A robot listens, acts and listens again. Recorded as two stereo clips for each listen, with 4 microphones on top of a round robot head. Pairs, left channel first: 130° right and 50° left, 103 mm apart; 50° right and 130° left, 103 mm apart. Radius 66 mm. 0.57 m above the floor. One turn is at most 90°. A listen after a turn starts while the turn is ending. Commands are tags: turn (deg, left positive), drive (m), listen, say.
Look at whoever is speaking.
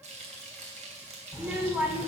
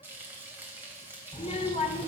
<turn deg="-25"/>
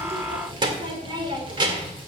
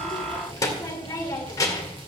<say>Facing the child speaking, 2 to 4 m away.</say>